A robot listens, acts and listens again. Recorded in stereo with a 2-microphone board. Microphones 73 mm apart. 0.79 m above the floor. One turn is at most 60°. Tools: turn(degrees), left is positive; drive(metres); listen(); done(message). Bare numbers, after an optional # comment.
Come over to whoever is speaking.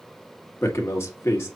# The man speaking: about 35° left or 145° left.
turn(35)
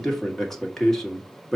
drive(1.0)
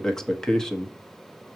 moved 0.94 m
# The man speaking is now 10° left.
turn(10)
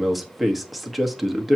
drive(1.0)
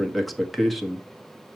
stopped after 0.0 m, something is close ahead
done("I am next to the man speaking.")